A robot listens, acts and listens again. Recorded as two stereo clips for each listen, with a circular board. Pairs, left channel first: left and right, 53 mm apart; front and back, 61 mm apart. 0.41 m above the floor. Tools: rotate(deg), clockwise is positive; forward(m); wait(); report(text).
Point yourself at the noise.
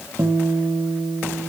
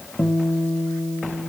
rotate(80)
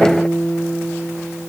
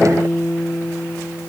rotate(10)
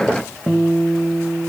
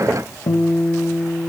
report("Facing the guitar, 1 to 2 m away.")